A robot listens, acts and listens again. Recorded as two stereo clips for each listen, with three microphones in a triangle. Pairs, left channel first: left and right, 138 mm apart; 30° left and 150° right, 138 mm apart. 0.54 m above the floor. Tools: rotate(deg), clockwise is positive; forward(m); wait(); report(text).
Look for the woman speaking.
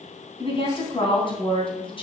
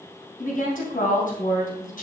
rotate(-40)
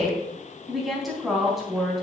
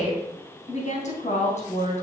report("Facing the woman speaking, 2 to 4 m away.")